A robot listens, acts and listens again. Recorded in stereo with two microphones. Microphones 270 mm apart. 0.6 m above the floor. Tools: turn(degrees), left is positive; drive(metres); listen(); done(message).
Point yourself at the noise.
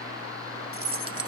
turn(degrees=55)
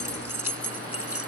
turn(degrees=60)
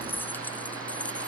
listen()
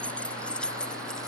done("Facing the keys jangling.")